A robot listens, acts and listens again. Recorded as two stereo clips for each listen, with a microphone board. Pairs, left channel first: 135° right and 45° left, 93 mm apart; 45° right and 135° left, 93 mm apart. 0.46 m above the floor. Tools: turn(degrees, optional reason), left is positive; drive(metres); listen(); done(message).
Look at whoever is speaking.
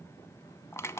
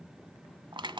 listen()
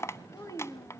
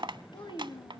turn(degrees=-85, reason="The child speaking: 85° right.")
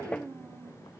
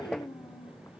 turn(degrees=-15, reason="The child speaking is now 15° right.")
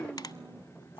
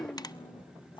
turn(degrees=-10, reason="The child speaking is now 10° right.")
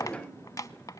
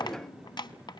listen()
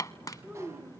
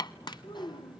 turn(degrees=-25, reason="The child speaking is now 25° right.")
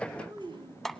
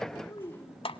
done("Found it: a child speaking, straight ahead.")